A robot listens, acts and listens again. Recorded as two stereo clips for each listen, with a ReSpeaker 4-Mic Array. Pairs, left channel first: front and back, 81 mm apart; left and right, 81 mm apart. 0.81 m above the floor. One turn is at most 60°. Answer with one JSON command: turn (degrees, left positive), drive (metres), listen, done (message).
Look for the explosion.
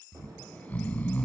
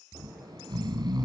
{"turn": -60}
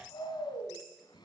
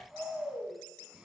{"turn": -60}
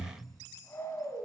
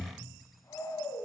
{"turn": -10}
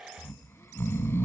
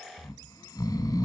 {"done": "I heard an explosion from this way, but can't make it out now."}